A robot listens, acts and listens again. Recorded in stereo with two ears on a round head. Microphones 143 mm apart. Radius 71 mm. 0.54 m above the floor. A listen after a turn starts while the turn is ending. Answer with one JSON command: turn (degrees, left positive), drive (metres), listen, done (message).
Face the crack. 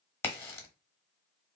{"turn": 30}
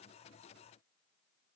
{"listen": true}
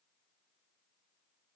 {"done": "I heard a crack, but can't make it out now. It was about 15° right or 135° left."}